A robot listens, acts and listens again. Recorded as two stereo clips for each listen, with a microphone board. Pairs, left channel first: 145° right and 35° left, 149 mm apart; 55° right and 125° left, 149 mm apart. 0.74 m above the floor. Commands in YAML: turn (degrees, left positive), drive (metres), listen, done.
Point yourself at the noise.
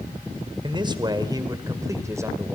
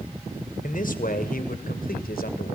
turn: -35
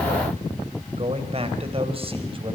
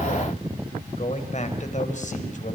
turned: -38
turn: -20
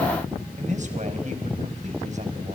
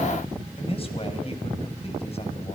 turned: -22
done: "Found it: a man speaking, straight ahead."